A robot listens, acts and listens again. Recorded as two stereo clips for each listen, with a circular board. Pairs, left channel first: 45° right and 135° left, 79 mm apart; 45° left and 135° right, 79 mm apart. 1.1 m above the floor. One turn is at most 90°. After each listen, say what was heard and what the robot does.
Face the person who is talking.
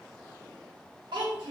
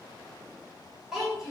The child speaking: 140° left. Turn 90° left.
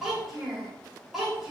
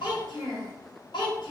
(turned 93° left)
The child speaking is now 50° left. Turn 50° left.
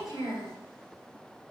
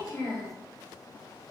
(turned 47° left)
Facing the child speaking.